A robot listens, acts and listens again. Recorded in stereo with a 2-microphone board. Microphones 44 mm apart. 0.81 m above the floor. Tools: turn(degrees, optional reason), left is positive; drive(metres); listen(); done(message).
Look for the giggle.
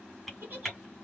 turn(degrees=-45, reason="The giggle: about 45° right or 135° right.")
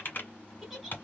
done("Facing the giggle.")